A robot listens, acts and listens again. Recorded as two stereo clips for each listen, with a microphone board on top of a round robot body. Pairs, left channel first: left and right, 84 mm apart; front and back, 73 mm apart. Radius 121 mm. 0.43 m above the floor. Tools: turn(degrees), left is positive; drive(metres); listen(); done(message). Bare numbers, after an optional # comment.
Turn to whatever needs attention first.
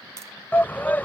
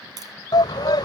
# The shout: 20° left.
turn(20)
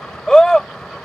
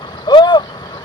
done("Found it: a shout, straight ahead.")